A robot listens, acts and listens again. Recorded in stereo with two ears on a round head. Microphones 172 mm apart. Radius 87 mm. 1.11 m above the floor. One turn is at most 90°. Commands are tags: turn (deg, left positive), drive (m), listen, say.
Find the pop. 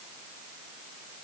<listen/>
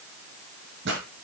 <turn deg="-65"/>
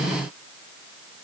<listen/>
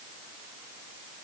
<say>I heard a pop, but can't make it out now. It was about straight ahead or 50° right.</say>